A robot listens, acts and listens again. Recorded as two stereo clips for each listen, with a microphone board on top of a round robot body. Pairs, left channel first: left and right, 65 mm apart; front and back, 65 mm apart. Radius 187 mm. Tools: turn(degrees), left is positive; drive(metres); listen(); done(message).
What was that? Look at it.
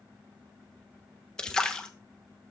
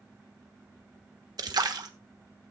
turn(degrees=170)
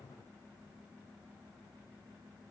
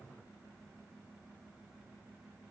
done("Facing where the splash came from. I can't hear it now.")